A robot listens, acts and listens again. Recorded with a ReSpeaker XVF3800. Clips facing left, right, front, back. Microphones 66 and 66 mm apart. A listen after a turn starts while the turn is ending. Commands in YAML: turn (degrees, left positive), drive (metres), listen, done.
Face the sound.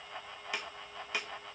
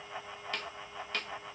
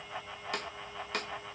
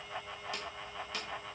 turn: 10
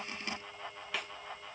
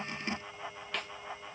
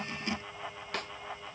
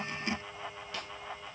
listen: true
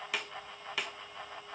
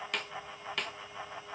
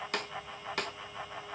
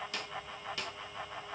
done: "Facing the snare drum."